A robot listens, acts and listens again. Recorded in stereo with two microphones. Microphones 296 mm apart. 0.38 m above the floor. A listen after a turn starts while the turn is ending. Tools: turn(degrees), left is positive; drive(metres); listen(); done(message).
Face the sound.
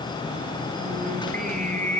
turn(degrees=-25)
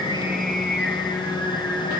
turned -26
done("Facing the singing.")